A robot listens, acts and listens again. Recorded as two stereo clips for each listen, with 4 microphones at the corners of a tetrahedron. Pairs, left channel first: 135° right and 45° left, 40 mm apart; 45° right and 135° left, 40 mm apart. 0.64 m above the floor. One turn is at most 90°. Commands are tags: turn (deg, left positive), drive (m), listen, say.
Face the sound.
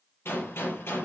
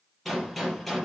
<turn deg="-90"/>
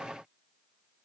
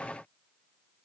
<turn deg="-40"/>
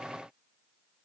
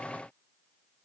<say>Facing where the gunshot came from. I can't hear it now.</say>